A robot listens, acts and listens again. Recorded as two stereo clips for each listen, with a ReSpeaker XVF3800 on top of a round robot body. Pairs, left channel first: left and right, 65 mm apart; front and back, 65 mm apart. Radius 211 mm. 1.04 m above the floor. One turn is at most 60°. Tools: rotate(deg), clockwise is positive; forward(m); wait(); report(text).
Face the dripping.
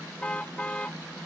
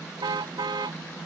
wait()
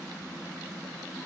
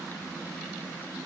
wait()
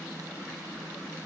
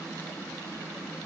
report("I can't make out dripping, only a car horn.")